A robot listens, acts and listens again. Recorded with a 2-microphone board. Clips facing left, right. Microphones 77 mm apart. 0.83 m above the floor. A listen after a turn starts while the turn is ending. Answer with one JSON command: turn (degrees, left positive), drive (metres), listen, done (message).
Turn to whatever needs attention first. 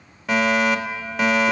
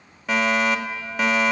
{"turn": 30}
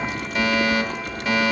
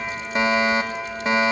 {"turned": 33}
{"turn": -30}
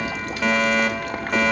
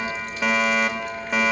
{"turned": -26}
{"done": "Facing the fire alarm, 2 to 4 m away."}